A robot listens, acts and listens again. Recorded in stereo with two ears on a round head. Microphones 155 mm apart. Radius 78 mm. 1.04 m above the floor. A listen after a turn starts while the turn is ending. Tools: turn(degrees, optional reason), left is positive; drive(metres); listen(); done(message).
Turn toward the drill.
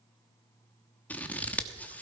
listen()
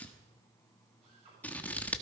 turn(degrees=-40, reason="The drill: about 40° right or 140° right.")
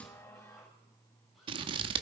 listen()
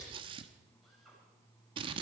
done("Facing the drill, over 4 m away.")